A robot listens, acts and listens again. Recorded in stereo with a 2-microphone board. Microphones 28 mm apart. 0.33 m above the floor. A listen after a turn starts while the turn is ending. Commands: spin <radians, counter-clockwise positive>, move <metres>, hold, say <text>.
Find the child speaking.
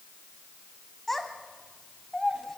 spin 0.52
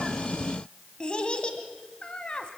spin 2.44
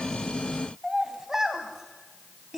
spin -0.26
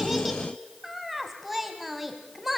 say Facing the child speaking, 1 to 2 m away.